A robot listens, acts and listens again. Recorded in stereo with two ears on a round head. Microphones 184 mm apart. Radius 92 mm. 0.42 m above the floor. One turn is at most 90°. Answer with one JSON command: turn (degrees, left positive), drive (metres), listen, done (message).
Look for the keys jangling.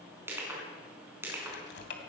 {"turn": 60}
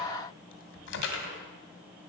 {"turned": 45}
{"turn": 70}
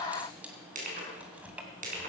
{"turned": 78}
{"turn": -10}
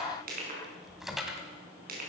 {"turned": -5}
{"done": "Facing the keys jangling, 2 to 4 m away."}